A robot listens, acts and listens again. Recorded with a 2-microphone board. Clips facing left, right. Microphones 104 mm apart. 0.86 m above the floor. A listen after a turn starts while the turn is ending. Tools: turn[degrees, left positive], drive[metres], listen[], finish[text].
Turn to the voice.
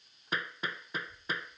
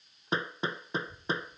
Thought: The child speaking: about 75° right or 105° right.
Action: turn[-75]
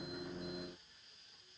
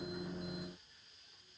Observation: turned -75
Action: finish[Facing the child speaking.]